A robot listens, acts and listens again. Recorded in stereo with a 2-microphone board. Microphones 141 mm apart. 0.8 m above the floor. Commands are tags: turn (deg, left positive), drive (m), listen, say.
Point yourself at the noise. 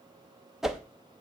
<turn deg="-30"/>
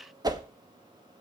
<turn deg="-150"/>
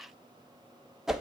<say>Found it: a whoosh, straight ahead.</say>